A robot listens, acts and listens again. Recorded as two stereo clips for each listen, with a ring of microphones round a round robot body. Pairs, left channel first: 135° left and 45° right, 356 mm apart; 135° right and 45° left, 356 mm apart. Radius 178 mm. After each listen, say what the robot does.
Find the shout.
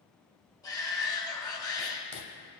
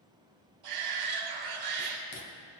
Turn 55° left.
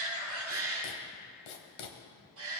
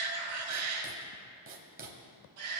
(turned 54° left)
Facing the shout, 1 to 2 m away.